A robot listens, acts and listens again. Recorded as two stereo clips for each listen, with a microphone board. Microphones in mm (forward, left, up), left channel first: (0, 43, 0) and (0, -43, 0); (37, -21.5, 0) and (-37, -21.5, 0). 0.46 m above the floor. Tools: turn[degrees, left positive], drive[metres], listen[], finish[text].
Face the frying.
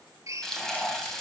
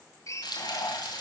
Action: finish[Found it: frying, straight ahead, 2 to 4 m away.]